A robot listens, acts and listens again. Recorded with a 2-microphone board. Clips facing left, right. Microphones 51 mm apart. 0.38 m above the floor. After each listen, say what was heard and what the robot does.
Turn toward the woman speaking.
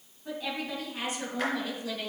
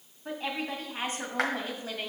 The woman speaking: about 30° right or 150° right. Turn 30° right.
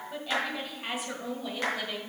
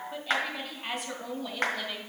So it is at 10° left. Turn 10° left.
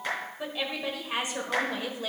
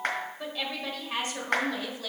The woman speaking is now 25° left. Turn 25° left.
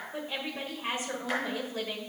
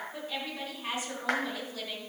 The woman speaking is now 30° left. Turn 30° left.
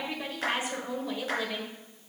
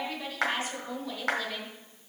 The woman speaking is now 20° left. Turn 20° left.
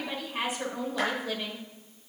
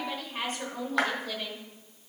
Facing the woman speaking.